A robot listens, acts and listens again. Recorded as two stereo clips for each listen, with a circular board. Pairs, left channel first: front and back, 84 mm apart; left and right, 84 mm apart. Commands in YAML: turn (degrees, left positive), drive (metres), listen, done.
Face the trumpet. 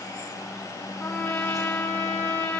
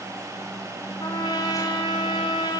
turn: 70
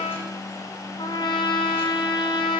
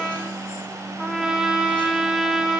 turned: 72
done: "Found it: a trumpet, straight ahead."